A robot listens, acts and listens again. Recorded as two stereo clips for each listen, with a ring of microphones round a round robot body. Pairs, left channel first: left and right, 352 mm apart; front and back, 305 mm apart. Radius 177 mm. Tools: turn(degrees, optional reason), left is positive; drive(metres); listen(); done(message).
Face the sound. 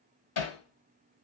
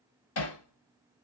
turn(degrees=40, reason="The hammering: 40° left.")
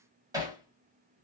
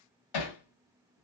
turn(degrees=-10, reason="The hammering is now 10° right.")
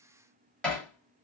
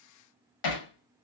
done("Found it: hammering, straight ahead.")